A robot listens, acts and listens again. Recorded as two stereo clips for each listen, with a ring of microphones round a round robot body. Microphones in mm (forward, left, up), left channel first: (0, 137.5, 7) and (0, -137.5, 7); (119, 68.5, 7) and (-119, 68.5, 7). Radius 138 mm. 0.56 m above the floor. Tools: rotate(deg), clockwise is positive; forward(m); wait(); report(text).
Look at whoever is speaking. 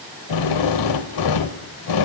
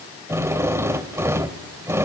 wait()
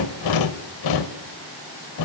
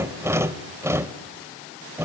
wait()
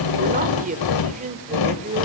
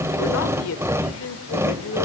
rotate(30)
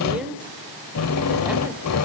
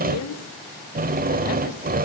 wait()
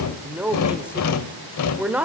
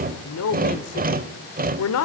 report("Facing the man speaking, 1 to 2 m away.")